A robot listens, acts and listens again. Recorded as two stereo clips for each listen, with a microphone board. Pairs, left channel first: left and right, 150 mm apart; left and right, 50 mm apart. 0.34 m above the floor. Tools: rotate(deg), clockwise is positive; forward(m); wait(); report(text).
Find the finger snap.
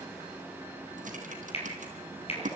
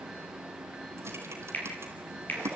rotate(-40)
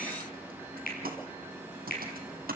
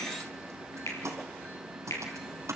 rotate(-100)
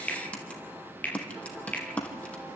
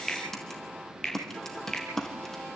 rotate(-10)
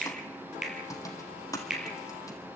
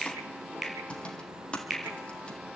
report("Facing the finger snap.")